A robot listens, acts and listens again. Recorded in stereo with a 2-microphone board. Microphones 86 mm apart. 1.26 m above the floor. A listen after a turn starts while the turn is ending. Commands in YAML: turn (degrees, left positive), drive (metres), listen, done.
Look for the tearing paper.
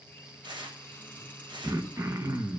turn: -65
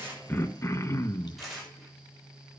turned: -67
done: "Facing the tearing paper."